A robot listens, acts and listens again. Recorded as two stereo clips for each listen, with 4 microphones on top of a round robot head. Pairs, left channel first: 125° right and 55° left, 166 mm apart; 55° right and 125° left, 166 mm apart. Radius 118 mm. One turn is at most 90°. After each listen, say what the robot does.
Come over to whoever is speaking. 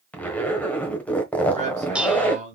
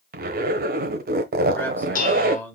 Turn 20° left.
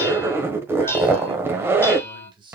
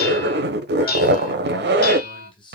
Drive 1.0 m forward.
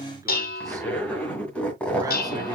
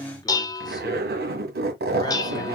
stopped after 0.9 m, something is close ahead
I am next to the man speaking.